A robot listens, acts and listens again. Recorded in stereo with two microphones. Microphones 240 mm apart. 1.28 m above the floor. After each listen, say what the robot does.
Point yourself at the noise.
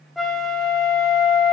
Turn 30° left.
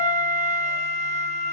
Turn 30° right.
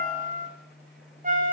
Turn 35° right.
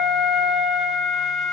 Facing the flute.